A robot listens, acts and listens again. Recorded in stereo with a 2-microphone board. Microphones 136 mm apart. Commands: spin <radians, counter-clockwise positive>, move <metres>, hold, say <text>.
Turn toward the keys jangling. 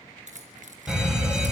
spin -1.05
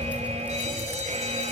hold
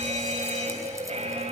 hold
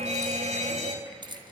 spin -0.61
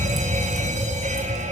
hold
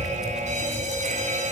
hold
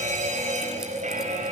say Facing where the keys jangling came from. I can't hear it now.